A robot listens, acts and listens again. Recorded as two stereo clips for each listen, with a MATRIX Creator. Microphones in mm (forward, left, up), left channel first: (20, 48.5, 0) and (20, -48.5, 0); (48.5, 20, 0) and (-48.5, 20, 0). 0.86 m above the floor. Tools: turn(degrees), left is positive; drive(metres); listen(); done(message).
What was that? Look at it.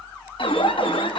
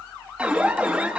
turn(degrees=100)
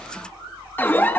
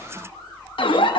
turn(degrees=20)
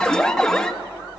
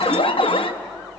done("Found it: an alarm, straight ahead, 1 to 2 m away.")